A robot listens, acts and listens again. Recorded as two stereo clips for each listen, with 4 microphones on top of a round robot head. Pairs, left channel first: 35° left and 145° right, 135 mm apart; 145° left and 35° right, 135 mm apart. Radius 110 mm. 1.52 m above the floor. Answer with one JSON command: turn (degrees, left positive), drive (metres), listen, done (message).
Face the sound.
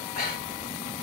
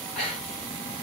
{"turn": 60}
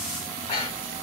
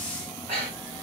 {"turn": 10}
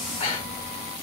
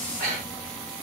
{"done": "Found it: breathing, straight ahead."}